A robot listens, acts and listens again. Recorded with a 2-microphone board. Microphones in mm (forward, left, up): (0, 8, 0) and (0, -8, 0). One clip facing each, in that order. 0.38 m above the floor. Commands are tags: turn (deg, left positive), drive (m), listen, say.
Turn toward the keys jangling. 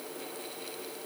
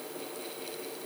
<listen/>
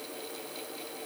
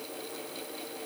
<listen/>
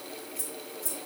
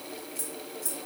<turn deg="-60"/>
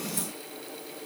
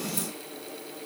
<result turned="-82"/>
<listen/>
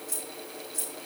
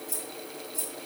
<turn deg="30"/>
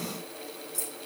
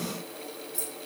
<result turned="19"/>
<turn deg="15"/>
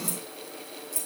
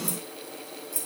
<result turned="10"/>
<say>Facing the keys jangling.</say>